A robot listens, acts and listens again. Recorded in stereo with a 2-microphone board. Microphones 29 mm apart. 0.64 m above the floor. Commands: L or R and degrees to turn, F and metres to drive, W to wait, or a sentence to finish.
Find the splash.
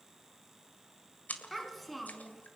L90
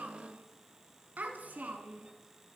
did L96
Facing where the splash came from. I can't hear it now.